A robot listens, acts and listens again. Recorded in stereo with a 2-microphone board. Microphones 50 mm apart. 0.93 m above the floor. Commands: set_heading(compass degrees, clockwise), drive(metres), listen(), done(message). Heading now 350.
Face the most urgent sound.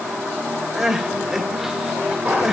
set_heading(20)
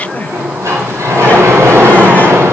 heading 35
listen()
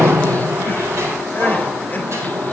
listen()
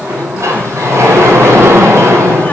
done("I heard crying, but can't make it out now. It was about 35° left or 125° right.")